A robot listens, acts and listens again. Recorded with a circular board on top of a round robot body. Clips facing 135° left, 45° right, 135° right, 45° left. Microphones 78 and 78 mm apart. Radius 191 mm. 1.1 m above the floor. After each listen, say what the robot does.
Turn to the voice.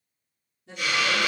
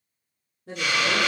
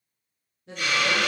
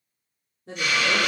Facing the woman speaking.